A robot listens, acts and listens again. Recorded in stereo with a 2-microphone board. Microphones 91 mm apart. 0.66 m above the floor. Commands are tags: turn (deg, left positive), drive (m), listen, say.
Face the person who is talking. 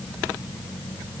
<listen/>
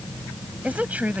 <turn deg="-15"/>
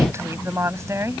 <turn deg="-30"/>
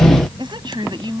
<turn deg="-120"/>
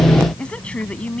<turn deg="10"/>
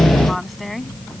<say>Found it: a woman speaking, straight ahead.</say>